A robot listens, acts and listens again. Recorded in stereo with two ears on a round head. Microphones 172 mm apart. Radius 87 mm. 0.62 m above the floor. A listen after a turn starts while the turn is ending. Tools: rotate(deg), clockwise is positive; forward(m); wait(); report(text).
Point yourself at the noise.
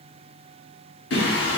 rotate(-70)
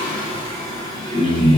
rotate(-30)
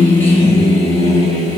rotate(-20)
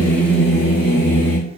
rotate(-15)
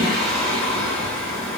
report("Found it: singing, straight ahead.")